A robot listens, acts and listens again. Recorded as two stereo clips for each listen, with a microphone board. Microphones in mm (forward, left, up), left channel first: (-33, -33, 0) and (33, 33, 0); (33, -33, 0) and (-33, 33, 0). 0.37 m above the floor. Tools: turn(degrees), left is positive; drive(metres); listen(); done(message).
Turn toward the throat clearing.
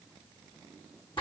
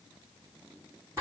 listen()
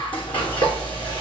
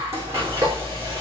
listen()
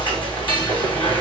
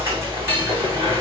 done("I can't make out throat clearing, only frying.")